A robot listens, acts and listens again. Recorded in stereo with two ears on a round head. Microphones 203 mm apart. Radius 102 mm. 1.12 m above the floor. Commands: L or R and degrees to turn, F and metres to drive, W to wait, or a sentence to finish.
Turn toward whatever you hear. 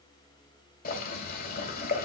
L40
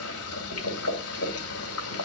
L95
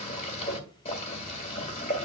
L30
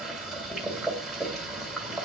Facing the boiling.